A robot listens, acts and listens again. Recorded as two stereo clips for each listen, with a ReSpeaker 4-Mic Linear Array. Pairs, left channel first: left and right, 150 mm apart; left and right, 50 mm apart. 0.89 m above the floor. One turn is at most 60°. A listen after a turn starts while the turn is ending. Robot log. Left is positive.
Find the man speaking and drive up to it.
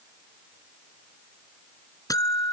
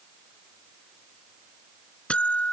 cmd idle
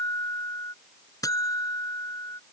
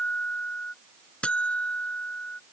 cmd idle
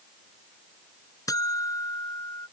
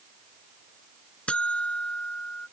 end: I can't make out a man speaking, only a buzzer.